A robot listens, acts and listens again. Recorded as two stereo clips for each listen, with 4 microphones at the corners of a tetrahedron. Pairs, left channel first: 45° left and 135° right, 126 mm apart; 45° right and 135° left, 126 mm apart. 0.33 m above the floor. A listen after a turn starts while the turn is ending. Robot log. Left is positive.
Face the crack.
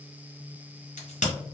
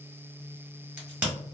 note: The crack: 60° left.
cmd yaw +60
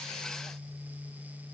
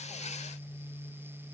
end: Facing where the crack came from. I can't hear it now.